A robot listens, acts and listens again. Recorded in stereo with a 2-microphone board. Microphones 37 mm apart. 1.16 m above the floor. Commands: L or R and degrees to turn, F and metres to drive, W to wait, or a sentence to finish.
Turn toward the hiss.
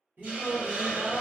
R45
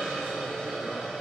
Facing the hiss, 1 to 2 m away.